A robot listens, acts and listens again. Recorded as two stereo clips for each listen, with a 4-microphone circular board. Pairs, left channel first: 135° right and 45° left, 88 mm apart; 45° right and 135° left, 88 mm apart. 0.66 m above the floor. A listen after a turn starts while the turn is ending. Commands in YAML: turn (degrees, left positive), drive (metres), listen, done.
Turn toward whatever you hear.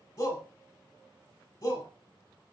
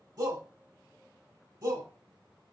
turn: 170
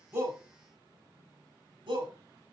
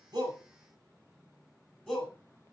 turn: 30
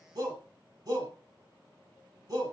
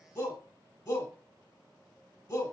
done: "Facing the shout, 2 to 4 m away."